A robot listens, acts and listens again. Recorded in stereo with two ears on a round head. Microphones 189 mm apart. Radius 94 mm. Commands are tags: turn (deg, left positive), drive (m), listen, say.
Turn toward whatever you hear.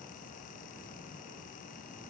<listen/>
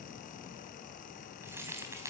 <turn deg="-30"/>
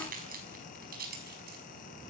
<turn deg="-135"/>
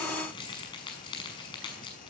<turn deg="25"/>
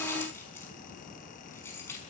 <turn deg="10"/>
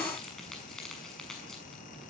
<say>Found it: keys jangling, straight ahead.</say>